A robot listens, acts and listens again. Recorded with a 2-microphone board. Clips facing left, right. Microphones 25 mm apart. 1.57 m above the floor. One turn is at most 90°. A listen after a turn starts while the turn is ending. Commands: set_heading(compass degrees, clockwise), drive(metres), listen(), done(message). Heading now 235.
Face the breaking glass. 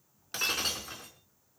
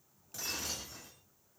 set_heading(170)
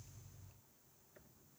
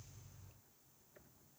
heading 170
listen()
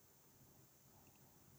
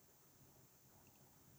done("I heard breaking glass, but can't make it out now. It was about straight ahead or 50° left.")